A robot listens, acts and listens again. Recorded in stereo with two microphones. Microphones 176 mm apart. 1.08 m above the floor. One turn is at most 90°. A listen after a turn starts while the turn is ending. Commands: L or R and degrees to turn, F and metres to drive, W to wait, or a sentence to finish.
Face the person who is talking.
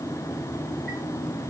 W
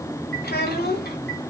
L55
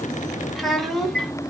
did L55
Found it: a child speaking, straight ahead.